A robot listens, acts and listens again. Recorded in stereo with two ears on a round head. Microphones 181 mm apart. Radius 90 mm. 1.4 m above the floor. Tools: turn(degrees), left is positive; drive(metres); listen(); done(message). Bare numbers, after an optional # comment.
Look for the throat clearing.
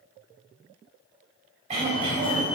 # The throat clearing: about 35° right or 145° right.
turn(-35)
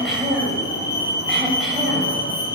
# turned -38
done("Found it: throat clearing, straight ahead.")